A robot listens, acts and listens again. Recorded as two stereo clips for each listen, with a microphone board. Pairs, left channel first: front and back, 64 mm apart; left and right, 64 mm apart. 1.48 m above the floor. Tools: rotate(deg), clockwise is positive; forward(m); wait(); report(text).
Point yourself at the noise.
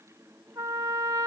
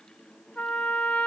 rotate(-165)
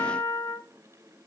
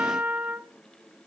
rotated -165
rotate(30)
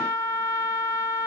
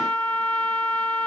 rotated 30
rotate(-20)
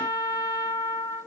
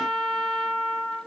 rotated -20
report("Found it: a trumpet, straight ahead.")